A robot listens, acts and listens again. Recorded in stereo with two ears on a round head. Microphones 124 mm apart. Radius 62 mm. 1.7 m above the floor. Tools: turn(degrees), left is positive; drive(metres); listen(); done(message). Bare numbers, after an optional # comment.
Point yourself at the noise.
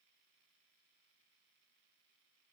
listen()
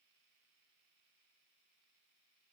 listen()
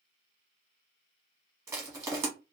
# The crushing: about 20° right or 160° right.
turn(-20)
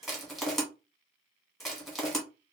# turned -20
done("Facing the crushing.")